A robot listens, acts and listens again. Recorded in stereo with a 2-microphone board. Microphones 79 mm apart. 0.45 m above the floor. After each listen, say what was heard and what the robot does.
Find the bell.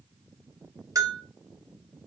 The bell: about 45° right or 135° right. Turn 45° right.
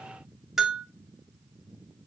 Found it: a bell, straight ahead, 1 to 2 m away.